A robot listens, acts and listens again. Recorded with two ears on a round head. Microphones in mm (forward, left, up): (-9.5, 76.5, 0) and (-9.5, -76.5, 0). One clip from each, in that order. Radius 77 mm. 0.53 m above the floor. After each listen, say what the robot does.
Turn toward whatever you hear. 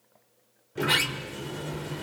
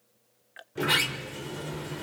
Turn 30° left.
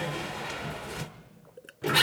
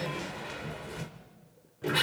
Turn 150° left.
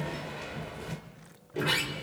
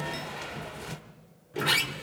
Turn 30° right.
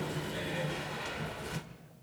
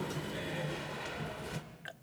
Found it: a sliding door, straight ahead.